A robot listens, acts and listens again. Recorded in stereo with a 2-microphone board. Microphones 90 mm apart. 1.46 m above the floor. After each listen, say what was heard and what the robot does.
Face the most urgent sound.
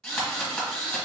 Keep listening.
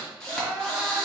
The crying: about 25° right or 155° right. Turn 25° right.
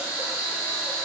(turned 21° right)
Keep listening.
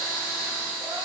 Keep listening.
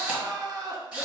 So it is at 135° right. Turn 135° right.
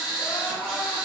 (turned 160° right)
The crying is now 25° left. Turn 25° left.
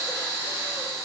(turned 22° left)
Keep listening.
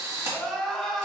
Facing the crying, under 1 m away.